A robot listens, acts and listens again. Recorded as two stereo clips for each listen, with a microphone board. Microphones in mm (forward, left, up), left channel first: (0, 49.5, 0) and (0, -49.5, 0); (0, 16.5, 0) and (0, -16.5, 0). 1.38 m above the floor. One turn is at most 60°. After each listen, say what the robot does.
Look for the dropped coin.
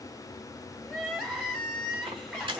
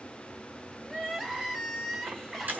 Turn 55° right.
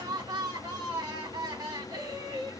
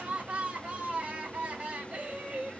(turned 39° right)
Keep listening.
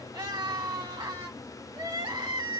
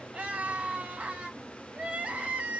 I heard a dropped coin, but can't make it out now. It was about 15° right or 85° right.